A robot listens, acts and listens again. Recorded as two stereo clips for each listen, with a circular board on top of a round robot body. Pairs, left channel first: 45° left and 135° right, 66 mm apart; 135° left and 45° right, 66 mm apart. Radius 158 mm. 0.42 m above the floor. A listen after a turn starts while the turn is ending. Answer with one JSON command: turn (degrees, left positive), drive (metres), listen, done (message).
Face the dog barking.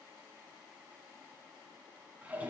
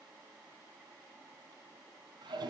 {"listen": true}
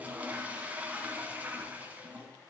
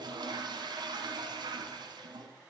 {"listen": true}
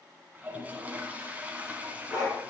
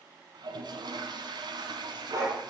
{"done": "Found it: a dog barking, straight ahead."}